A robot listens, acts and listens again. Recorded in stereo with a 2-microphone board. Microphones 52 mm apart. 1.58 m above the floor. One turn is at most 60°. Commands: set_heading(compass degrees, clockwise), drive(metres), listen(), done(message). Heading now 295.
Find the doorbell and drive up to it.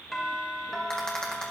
set_heading(265)
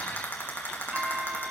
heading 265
set_heading(290)
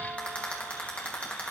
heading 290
listen()
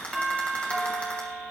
drive(1.0)
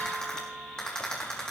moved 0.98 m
drive(1.0)
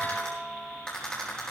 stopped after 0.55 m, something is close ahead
done("I am next to the doorbell.")